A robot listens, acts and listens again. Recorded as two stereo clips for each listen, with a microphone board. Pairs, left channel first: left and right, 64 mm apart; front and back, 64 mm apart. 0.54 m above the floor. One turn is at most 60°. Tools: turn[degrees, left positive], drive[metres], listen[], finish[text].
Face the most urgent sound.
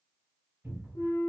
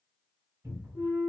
Action: listen[]
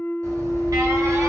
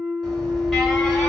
Thought: The alarm: 90° right.
Action: turn[-60]
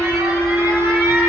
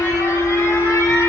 Thought: The alarm is now 45° right.
Action: turn[-45]
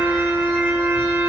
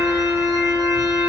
Action: listen[]
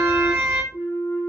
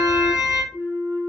Thought: The alarm is now 25° right.
Action: turn[-25]
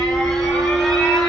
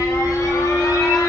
Action: finish[Found it: an alarm, straight ahead, 1 to 2 m away.]